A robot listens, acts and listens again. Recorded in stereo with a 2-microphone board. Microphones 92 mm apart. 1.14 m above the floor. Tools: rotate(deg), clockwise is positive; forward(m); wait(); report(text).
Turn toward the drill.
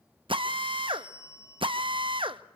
rotate(65)
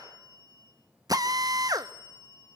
rotate(45)
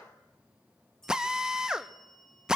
report("Facing the drill.")